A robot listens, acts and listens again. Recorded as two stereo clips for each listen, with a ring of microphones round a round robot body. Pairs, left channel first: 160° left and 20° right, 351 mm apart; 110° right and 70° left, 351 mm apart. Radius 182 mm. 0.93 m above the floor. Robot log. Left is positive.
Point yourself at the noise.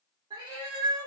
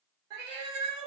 note: The cat meowing: 55° left.
cmd yaw +55
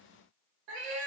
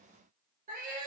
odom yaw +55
end: Facing the cat meowing.